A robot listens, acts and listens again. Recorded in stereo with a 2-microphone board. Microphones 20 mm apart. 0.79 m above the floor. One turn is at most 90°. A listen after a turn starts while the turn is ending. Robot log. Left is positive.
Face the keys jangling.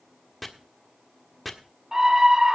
cmd idle
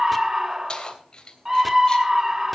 note: The keys jangling: about 40° left or 140° left.
cmd yaw +40
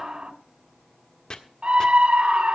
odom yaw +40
cmd idle
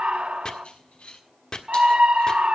note: So it is at 105° left.
cmd yaw +90
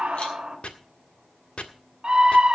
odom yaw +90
note: Nothing new. It was at 15° left.
cmd yaw +15
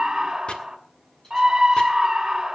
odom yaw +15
cmd idle
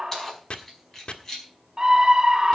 note: The keys jangling is now 25° left.
cmd yaw +25
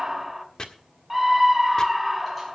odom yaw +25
cmd idle
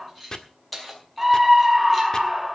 end: Facing the keys jangling, over 4 m away.